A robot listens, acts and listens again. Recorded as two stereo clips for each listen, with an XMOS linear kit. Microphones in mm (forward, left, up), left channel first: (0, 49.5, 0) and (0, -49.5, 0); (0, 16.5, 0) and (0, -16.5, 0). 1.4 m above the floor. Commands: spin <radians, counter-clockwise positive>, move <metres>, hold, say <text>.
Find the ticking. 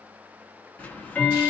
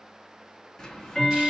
spin 0.26
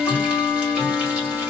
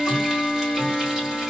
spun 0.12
spin 0.52
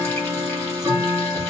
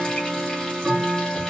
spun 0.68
spin -0.52
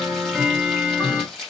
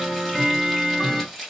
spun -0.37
spin -0.17
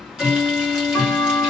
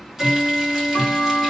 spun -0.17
say Found it: ticking, straight ahead, under 1 m away.